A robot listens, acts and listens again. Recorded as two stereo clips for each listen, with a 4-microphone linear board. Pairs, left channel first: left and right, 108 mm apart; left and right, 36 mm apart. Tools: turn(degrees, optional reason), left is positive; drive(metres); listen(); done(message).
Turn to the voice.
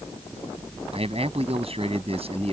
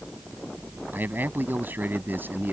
turn(degrees=-60, reason="The man speaking: about 60° right or 120° right.")
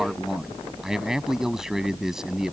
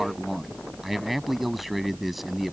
done("Facing the man speaking.")